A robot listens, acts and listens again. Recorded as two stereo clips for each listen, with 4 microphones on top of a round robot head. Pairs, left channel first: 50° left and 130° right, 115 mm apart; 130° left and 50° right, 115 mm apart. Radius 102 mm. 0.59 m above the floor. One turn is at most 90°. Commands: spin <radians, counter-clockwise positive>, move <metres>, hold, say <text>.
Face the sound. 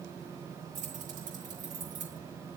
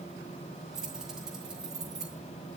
spin -1.57
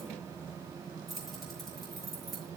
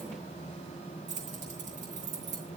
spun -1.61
spin -0.70
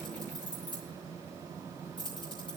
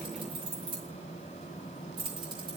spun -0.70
say Facing the keys jangling, over 4 m away.